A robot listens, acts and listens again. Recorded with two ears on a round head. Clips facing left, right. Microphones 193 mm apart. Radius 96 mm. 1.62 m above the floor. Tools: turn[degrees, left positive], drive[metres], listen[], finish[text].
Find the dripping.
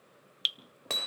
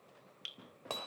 Thought: The dripping: about 50° left or 130° left.
Action: turn[50]
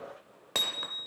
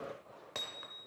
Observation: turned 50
Action: listen[]
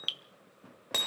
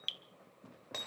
Thought: So it is at 10° left.
Action: turn[10]
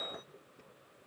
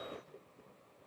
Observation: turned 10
Action: listen[]
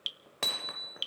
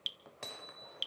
Action: finish[Found it: dripping, straight ahead.]